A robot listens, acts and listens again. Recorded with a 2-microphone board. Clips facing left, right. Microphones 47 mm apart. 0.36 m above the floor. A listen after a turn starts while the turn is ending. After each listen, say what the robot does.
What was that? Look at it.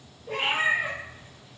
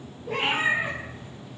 Turn 30° right.
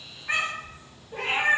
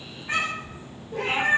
Turn 30° left.
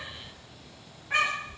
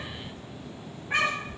Found it: a cat meowing, straight ahead.